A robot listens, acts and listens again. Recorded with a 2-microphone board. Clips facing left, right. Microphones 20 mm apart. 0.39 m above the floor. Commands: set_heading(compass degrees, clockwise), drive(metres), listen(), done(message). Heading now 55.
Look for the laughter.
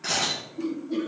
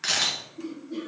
set_heading(15)
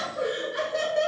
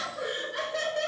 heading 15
set_heading(25)
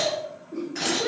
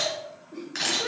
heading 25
set_heading(45)
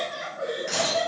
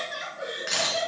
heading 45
set_heading(85)
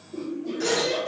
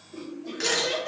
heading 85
set_heading(115)
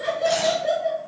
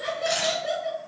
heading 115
done("Found it: laughter, straight ahead, 1 to 2 m away.")